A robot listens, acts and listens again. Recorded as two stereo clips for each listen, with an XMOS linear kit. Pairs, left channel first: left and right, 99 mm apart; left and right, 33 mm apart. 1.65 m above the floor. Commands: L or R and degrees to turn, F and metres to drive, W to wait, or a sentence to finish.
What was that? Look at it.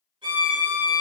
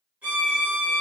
R55
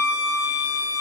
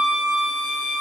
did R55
R30
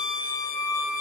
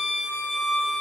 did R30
Found it: a violin, straight ahead.